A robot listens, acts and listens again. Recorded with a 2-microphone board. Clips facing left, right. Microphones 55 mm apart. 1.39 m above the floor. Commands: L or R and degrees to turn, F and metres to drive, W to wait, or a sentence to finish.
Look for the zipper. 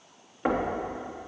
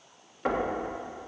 W
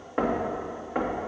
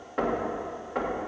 W
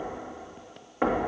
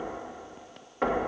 I can't make out a zipper, only knocking.